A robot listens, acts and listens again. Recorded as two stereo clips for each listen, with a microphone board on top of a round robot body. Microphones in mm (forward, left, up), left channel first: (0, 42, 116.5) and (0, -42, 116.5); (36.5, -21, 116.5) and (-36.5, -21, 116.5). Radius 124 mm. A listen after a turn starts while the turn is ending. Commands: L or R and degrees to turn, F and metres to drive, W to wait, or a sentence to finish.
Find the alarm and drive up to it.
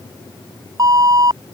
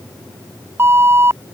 R125
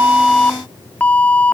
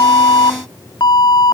L20
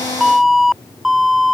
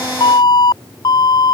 F1.0
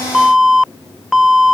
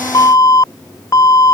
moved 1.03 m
F1.0
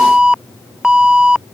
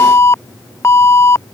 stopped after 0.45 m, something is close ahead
R15
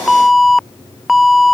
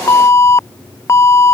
Arrived at the alarm, straight ahead.